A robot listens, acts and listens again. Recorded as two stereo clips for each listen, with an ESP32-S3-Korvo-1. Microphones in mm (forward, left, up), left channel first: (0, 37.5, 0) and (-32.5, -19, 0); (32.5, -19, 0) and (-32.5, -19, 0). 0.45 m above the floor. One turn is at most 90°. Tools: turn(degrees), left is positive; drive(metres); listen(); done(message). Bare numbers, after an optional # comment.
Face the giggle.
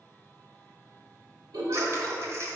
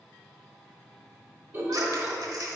# The giggle: 120° right.
turn(-90)
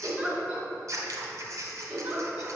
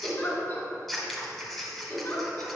# The giggle is now 45° right.
turn(-45)
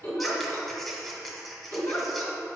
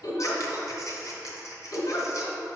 # The giggle is now 10° left.
turn(10)
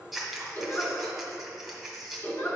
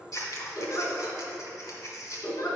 done("Found it: a giggle, straight ahead, 1 to 2 m away.")